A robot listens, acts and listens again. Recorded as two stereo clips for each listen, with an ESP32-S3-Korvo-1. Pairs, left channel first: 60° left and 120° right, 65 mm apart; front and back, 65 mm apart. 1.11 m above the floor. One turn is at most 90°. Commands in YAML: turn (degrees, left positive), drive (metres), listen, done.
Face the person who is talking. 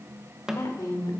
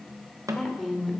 turn: 85
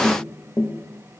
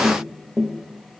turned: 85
listen: true
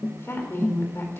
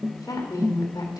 turn: 10
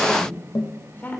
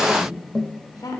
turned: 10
done: "Facing the woman speaking, 2 to 4 m away."